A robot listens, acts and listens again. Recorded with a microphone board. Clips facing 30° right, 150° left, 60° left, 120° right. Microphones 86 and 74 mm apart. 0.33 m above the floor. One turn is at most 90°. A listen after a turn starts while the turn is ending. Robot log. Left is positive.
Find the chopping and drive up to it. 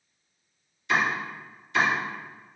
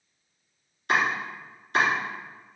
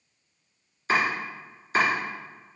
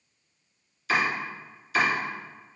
note: The chopping: 115° left.
cmd yaw +90
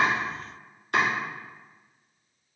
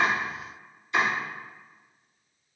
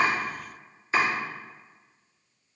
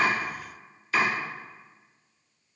cmd fwd 1.0
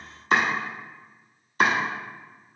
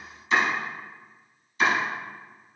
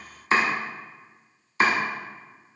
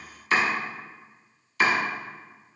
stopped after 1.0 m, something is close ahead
end: Arrived at the chopping, straight ahead.